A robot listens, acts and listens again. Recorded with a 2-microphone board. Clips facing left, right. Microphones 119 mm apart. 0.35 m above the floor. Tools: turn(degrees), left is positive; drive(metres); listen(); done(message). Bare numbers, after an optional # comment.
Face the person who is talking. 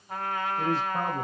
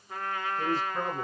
# The man speaking: about 55° left or 125° left.
turn(55)
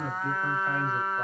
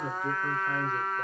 # So it is at 40° left.
turn(40)
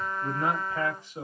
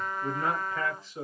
# The man speaking is now 25° left.
turn(25)
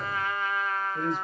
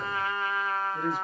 # The man speaking is now 10° right.
turn(-10)
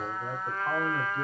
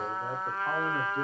done("Found it: a man speaking, straight ahead, 1 to 2 m away.")